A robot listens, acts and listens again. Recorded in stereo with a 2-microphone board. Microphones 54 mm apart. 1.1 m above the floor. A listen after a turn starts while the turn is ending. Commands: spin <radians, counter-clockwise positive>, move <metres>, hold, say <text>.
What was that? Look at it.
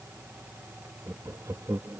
spin -1.31
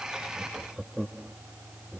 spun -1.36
spin -0.17
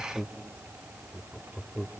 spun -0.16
say Facing the laughter.